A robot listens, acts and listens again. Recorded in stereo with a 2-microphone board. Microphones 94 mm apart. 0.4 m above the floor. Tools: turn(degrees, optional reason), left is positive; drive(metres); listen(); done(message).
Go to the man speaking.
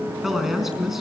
turn(degrees=-30)
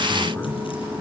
listen()
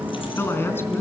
turn(degrees=25, reason="So it is at 25° left.")
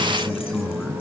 turn(degrees=10, reason="The man speaking is now 10° left.")
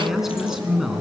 drive(metres=1.0)
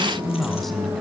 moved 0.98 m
drive(metres=1.0)
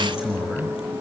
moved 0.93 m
drive(metres=1.0)
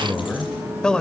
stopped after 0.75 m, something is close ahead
turn(degrees=10, reason="The man speaking is now 10° left.")
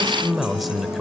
done("I am next to the man speaking.")